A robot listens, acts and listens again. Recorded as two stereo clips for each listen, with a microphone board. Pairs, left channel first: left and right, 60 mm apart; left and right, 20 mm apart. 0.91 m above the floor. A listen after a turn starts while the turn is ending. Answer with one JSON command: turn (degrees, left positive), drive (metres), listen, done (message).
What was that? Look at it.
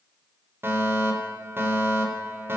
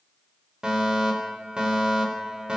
{"turn": -40}
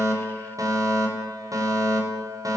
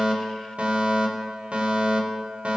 {"turn": -100}
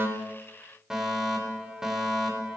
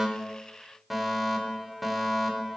{"turn": -10}
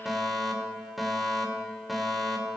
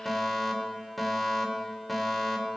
{"done": "Facing the fire alarm."}